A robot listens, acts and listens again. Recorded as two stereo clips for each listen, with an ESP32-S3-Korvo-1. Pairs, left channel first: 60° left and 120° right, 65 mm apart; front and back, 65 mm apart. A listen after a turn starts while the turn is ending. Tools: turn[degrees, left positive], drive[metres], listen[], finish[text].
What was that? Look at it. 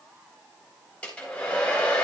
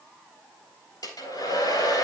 Thought: The hair dryer: 10° right.
Action: turn[-10]
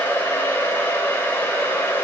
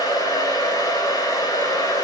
Action: finish[Found it: a hair dryer, straight ahead.]